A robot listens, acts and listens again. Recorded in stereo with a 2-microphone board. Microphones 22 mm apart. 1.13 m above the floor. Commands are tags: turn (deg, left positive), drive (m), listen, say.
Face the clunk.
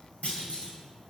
<turn deg="90"/>
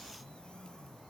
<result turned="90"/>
<say>I heard a clunk from this way, but can't make it out now.</say>